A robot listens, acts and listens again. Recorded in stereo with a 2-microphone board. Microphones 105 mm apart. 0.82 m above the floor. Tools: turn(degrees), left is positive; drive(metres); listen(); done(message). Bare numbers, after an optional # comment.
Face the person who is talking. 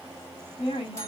# The woman speaking: about 60° left or 120° left.
turn(60)
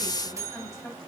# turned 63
done("Found it: a woman speaking, straight ahead, over 4 m away.")